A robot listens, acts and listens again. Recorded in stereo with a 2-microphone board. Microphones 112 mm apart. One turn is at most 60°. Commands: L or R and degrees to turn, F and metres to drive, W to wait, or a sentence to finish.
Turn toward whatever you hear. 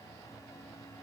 W
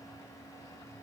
W
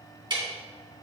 R45
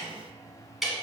Facing the ticking, 2 to 4 m away.